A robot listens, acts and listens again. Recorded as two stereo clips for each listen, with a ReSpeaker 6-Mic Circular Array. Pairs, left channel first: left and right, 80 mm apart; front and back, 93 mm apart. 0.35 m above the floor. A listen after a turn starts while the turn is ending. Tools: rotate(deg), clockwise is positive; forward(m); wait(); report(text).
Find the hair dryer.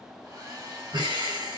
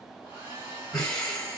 rotate(120)
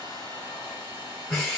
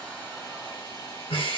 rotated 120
rotate(35)
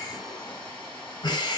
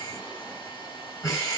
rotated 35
rotate(-20)
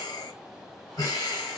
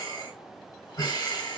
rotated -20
wait()
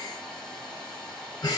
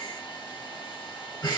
report("Facing the hair dryer.")